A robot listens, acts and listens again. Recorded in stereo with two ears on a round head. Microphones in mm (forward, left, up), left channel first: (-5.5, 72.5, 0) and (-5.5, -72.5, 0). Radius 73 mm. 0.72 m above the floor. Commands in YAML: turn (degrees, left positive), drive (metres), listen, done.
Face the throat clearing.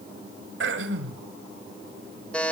turn: -90
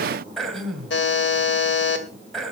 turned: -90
done: "Found it: throat clearing, straight ahead."